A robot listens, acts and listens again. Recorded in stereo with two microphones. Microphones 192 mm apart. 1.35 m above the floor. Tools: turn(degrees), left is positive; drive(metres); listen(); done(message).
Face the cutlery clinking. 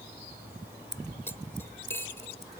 turn(degrees=30)
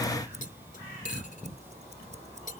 turn(degrees=135)
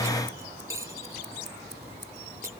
turn(degrees=-15)
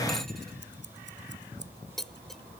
done("Facing the cutlery clinking.")